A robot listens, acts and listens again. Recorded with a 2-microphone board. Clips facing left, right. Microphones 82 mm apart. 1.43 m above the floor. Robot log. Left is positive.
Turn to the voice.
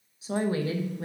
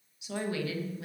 note: The woman speaking: about 35° left or 145° left.
cmd yaw +35
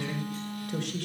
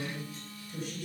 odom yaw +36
note: So it is at 110° left.
cmd yaw +110
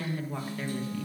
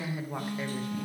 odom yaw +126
note: The woman speaking is now 15° right.
cmd yaw -15
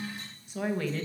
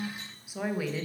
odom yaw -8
note: The woman speaking is now 10° right.
cmd yaw -10
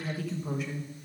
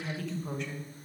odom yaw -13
end: Facing the woman speaking, 1 to 2 m away.